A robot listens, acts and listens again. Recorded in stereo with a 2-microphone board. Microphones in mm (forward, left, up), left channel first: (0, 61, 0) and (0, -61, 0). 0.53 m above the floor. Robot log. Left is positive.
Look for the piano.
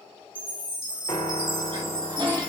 note: The piano: about 35° left or 145° left.
cmd yaw +35
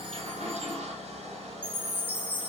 cmd idle
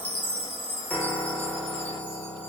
note: So it is at 10° left.
cmd yaw +10
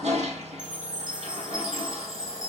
cmd idle
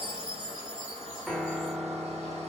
end: Facing the piano, under 1 m away.